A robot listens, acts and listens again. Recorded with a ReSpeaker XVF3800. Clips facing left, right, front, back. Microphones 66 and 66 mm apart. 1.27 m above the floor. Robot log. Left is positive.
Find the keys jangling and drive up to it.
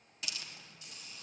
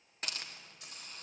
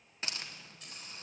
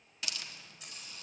note: The keys jangling: 95° right.
cmd yaw -95
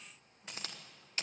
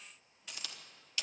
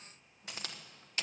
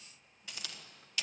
cmd idle
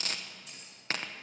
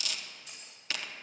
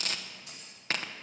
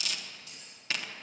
cmd fwd 1.0
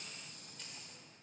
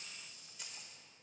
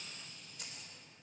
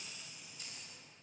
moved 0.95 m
note: The keys jangling is now 10° right.
cmd yaw -10
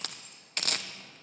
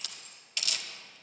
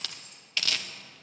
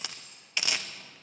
cmd idle
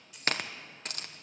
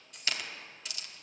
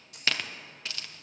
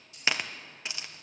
cmd fwd 1.0
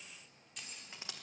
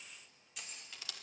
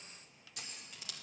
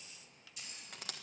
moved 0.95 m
cmd fwd 1.0
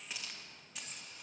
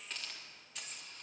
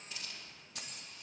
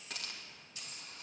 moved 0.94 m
cmd fwd 1.0
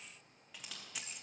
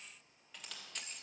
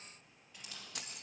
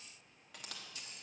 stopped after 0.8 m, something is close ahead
end: I am next to the keys jangling.